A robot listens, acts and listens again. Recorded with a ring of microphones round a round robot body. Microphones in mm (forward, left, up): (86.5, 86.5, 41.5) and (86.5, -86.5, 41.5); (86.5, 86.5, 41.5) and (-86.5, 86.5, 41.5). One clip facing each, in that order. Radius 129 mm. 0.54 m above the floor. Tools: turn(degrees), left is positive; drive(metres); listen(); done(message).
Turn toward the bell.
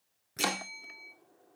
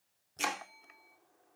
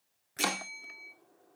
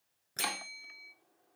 turn(degrees=135)
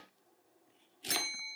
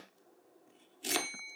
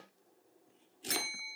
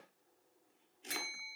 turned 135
turn(degrees=40)
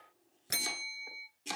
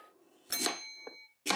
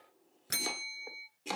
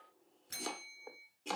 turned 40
turn(degrees=10)
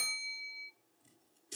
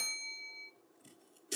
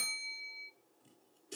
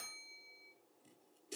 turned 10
done("Found it: a bell, straight ahead.")